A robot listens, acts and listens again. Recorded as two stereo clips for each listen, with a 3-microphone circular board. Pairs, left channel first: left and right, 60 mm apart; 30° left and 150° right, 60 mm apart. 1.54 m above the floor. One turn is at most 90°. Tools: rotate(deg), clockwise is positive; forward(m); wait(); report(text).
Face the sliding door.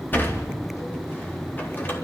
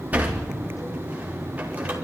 rotate(-90)
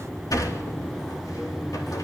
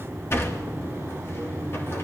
rotate(-75)
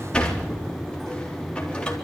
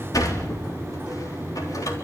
rotate(-15)
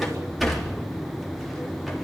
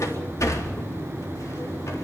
report("Facing the sliding door.")